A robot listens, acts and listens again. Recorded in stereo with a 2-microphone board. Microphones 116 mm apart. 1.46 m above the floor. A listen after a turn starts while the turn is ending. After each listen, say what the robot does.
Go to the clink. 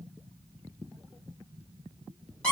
Keep listening.
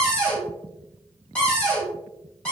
Keep listening.
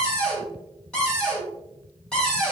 I can't make out a clink, only a cupboard door.